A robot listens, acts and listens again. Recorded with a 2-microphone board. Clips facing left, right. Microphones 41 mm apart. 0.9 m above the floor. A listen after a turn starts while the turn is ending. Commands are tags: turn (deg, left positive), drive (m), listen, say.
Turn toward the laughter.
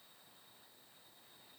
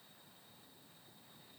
<listen/>
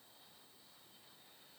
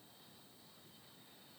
<listen/>
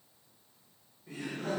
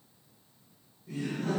<turn deg="50"/>
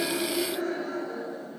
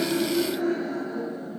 <turn deg="80"/>
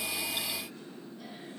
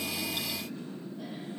<turn deg="-15"/>
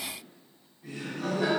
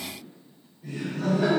<say>Found it: laughter, straight ahead.</say>